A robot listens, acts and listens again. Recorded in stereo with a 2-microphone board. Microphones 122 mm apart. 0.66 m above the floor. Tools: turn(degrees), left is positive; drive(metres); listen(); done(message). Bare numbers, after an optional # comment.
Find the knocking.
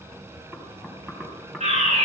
turn(30)
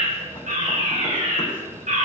listen()
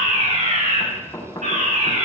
# So it is at 150° left.
turn(150)
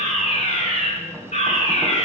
listen()
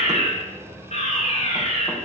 listen()
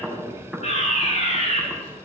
done("Found it: knocking, straight ahead, 2 to 4 m away.")